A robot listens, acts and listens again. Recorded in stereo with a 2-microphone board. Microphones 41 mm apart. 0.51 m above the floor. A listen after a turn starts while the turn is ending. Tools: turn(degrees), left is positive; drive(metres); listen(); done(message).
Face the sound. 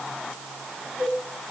turn(degrees=70)
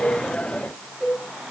done("Found it: a cowbell, straight ahead, over 4 m away.")